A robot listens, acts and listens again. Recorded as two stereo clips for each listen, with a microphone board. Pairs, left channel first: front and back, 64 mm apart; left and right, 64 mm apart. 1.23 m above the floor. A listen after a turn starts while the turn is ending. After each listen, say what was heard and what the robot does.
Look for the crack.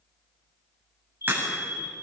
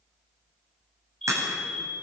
The crack: 120° right. Turn 120° right.
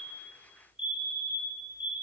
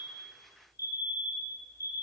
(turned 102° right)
Nothing new. It was at 20° right. Turn 20° right.
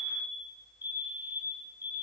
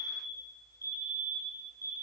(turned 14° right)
Facing where the crack came from. I can't hear it now.